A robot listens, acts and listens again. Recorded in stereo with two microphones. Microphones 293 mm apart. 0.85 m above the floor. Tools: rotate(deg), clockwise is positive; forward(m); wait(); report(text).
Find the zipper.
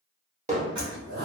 rotate(65)
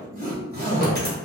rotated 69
rotate(35)
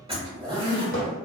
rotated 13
rotate(20)
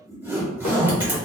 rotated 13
rotate(10)
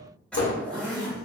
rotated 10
report("Found it: a zipper, straight ahead.")